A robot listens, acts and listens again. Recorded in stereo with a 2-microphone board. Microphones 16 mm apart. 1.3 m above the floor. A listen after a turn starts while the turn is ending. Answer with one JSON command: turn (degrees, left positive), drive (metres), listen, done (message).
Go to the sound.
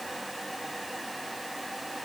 {"listen": true}
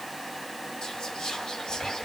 {"turn": 55}
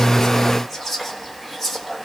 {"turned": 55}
{"drive": 1.0}
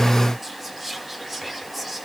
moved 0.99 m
{"turn": -10}
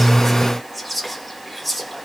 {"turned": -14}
{"drive": 1.0}
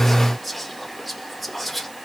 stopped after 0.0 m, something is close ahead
{"done": "I am next to the whispering."}